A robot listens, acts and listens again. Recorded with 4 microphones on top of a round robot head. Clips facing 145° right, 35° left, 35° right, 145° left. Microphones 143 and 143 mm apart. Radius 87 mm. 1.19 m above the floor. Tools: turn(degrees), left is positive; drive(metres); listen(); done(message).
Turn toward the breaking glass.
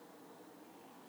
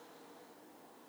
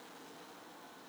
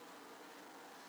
listen()
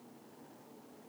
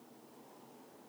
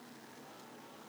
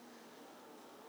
listen()
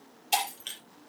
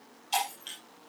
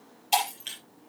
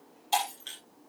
turn(degrees=-110)
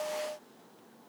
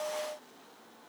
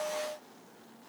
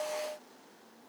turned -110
done("Facing where the breaking glass came from. I can't hear it now.")